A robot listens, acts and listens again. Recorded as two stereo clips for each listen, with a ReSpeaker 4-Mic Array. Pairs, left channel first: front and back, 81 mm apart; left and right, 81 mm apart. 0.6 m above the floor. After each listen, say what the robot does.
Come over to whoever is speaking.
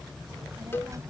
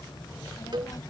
Turn 130° left.
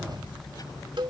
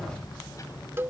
Turn 40° left.
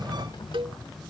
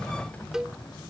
Keep listening.
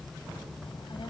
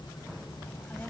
Turn 20° left.
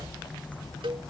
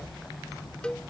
Drive 1.0 m forward.
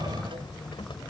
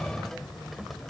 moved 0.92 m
Drive 1.0 m forward.
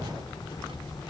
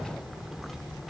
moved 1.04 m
Drive 1.0 m forward.
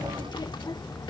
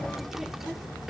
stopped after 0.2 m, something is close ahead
I am next to the child speaking.